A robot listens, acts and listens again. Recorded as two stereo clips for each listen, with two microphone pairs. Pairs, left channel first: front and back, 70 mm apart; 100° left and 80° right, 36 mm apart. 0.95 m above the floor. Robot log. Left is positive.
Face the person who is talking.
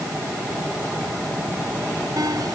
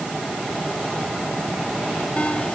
cmd idle
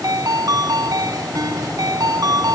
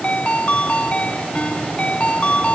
cmd idle
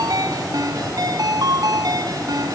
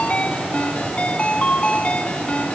end: I can't make out anyone speaking, only a ringtone.